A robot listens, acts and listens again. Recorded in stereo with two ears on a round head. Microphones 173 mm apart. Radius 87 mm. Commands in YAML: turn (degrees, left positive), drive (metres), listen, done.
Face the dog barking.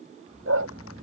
turn: -90
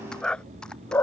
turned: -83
turn: 10
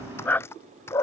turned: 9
turn: 15
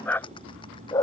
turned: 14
turn: 20
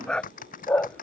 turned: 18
turn: 10
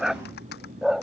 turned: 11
done: "Facing the dog barking."